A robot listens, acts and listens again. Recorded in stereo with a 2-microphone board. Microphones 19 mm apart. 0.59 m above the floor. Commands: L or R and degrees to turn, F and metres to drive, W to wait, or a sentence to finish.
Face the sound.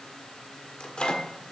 L60
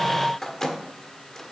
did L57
L35
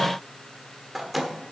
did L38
Facing the microwave, 1 to 2 m away.